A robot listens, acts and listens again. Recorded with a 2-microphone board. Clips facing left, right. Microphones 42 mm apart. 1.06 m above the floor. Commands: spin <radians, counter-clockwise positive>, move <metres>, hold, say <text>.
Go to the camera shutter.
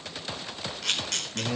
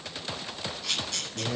spin 1.57
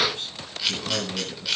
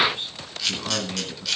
spin 0.17
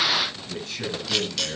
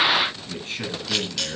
move 1.0
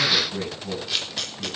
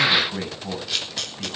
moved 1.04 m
move 1.0
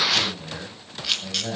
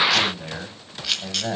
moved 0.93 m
move 1.0
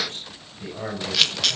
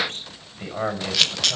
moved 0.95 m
move 1.0
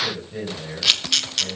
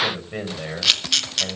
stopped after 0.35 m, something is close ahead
say I am next to the camera shutter.